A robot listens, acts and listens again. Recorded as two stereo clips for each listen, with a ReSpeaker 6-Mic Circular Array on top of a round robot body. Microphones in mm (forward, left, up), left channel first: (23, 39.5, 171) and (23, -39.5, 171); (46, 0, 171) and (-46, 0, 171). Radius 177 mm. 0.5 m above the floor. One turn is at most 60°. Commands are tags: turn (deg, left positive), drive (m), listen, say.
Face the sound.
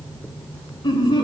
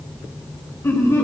<turn deg="60"/>
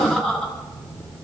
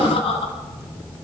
<turn deg="10"/>
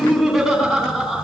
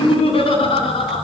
<say>Facing the laughter, over 4 m away.</say>